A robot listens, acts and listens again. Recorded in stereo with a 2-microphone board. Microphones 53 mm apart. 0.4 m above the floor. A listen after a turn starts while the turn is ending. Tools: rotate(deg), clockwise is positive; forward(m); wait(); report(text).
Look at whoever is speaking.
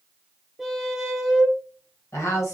rotate(-60)
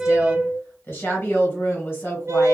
rotate(-45)
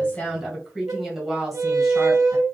report("Found it: a woman speaking, straight ahead.")